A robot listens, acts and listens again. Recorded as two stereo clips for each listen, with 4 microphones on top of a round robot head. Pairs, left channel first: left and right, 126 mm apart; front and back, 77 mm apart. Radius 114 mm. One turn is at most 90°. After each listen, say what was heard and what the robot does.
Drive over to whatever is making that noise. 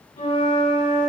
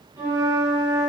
The flute: 135° left. Turn 90° left.
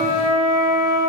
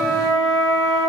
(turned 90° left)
The flute is now 80° left. Turn 80° left.
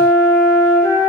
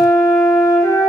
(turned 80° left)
The flute is now 30° left. Turn 30° left.
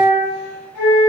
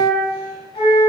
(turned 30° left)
The flute is now 15° left. Turn 15° left.
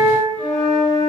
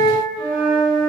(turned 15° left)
Drive 1.0 m forward.
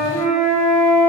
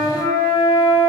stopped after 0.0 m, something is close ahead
Blocked. The flute is further on, straight ahead.